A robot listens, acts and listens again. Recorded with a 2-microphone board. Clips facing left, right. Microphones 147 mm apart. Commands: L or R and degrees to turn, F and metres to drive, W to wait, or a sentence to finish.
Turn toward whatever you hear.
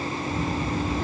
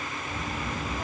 R30
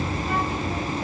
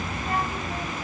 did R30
R140
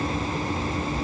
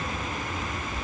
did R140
Facing the child speaking, 2 to 4 m away.